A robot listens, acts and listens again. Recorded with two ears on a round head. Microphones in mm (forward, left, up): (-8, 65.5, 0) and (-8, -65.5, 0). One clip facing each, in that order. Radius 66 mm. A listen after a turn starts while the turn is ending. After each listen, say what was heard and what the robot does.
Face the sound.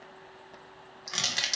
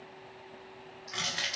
The crushing: about 45° left or 135° left. Turn 45° left.
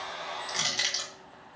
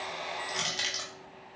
Facing the crushing.